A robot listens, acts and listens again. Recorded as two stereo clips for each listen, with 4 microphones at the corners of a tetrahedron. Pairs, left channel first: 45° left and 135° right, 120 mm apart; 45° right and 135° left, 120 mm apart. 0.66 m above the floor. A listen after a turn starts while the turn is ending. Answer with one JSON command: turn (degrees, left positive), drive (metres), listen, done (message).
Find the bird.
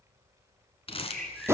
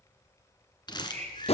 {"turn": 130}
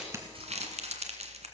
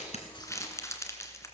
{"listen": true}
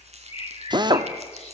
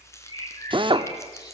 {"turn": 10}
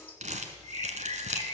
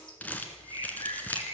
{"done": "Facing the bird."}